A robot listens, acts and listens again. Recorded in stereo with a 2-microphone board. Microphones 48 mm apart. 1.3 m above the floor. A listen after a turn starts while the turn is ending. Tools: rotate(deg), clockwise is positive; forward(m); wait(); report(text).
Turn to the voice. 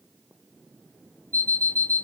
wait()
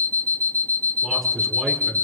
rotate(-30)
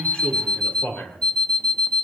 rotate(-140)
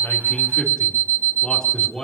rotate(-15)
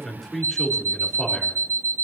report("Found it: a man speaking, straight ahead.")